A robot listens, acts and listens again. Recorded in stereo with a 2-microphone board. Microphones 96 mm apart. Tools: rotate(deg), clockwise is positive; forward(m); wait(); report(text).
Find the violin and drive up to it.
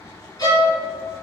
rotate(-45)
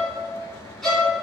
forward(1.0)
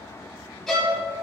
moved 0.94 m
forward(1.0)
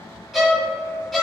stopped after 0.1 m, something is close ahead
report("I am next to the violin.")